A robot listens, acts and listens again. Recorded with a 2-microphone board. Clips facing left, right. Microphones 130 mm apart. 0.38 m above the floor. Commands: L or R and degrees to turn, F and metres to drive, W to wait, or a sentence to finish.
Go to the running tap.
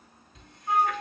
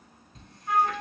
R45
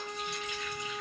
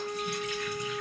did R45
W
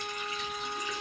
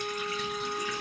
W
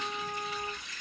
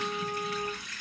R90
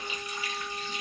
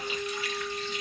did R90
L20
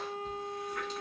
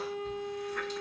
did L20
W
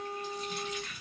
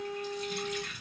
F1.0
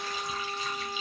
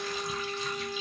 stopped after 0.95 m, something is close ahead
W
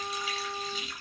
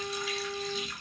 Arrived at the running tap, straight ahead.